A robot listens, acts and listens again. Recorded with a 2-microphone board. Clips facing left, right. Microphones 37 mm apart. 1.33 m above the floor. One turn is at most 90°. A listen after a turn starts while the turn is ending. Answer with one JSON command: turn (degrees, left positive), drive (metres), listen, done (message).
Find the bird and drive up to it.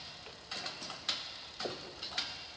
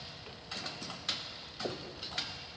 {"listen": true}
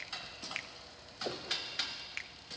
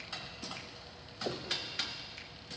{"listen": true}
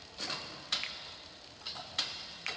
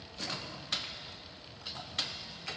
{"done": "I can't make out a bird to turn to."}